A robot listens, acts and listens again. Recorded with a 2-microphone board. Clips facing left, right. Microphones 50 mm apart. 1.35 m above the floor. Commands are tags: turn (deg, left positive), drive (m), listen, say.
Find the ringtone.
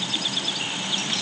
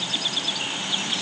<listen/>
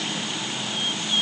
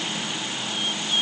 <listen/>
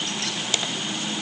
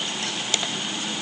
<say>I can't make out a ringtone to turn to.</say>